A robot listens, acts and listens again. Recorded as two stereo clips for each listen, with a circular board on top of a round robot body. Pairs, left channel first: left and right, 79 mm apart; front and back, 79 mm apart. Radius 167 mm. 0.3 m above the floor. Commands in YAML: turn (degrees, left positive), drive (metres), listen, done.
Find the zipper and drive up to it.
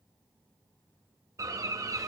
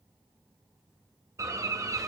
listen: true
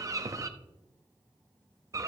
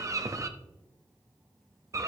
listen: true
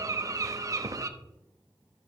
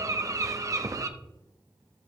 done: "I can't make out a zipper, only a bird."